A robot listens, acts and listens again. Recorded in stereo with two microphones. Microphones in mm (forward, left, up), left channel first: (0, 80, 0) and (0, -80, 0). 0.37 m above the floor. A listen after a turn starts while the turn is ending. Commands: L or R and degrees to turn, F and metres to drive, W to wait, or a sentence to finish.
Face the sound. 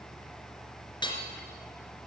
L30
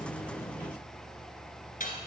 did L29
L120
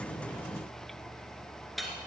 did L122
Found it: hammering, straight ahead.